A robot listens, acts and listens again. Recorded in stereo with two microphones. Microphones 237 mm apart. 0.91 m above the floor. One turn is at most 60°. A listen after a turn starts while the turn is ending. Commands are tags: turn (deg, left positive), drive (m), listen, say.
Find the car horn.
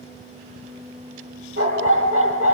<listen/>
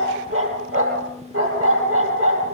<listen/>
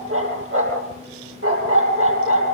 <say>I can't make out a car horn to turn to.</say>